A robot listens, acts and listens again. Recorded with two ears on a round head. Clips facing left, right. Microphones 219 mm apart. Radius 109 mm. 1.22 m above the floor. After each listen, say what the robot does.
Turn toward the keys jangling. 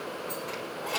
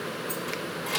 Turn 35° right.
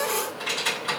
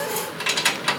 Turn 95° right.
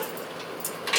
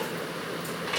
Turn 55° left.
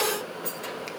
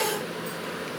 Turn 30° left.
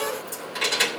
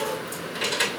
Found it: keys jangling, straight ahead.